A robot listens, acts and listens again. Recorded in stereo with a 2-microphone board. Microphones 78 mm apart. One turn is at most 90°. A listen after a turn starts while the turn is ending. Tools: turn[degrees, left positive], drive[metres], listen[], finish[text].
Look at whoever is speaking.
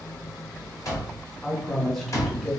Action: turn[30]
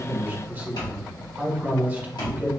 Thought: So it is at 25° right.
Action: turn[-25]
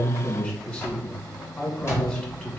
Thought: The man speaking is now 20° left.
Action: turn[20]
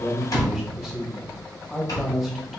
Action: finish[Found it: a man speaking, straight ahead, 1 to 2 m away.]